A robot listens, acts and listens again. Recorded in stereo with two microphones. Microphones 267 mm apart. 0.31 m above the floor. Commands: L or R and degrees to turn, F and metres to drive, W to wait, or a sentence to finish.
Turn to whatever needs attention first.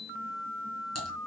W
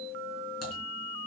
W
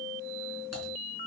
I can't make out anything urgent to turn to.